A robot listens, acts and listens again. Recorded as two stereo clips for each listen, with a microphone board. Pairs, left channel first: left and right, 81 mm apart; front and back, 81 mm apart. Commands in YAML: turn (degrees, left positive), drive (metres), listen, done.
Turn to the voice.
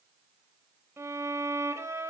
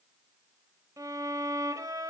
listen: true
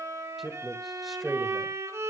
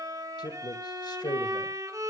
done: "Found it: a man speaking, straight ahead, 1 to 2 m away."